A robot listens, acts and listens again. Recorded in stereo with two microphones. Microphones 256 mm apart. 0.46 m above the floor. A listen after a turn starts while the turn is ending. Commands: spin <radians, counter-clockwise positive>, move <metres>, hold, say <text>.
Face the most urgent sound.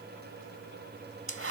hold
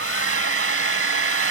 hold
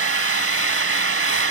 say I can't make out anything urgent to turn to.